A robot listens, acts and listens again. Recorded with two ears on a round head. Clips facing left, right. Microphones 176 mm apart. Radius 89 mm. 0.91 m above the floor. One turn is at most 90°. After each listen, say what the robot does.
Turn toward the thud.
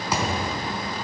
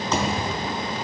Turn 30° left.
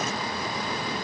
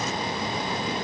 Keep listening.
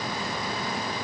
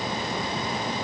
I heard a thud, but can't make it out now. It was about 20° right or 140° left.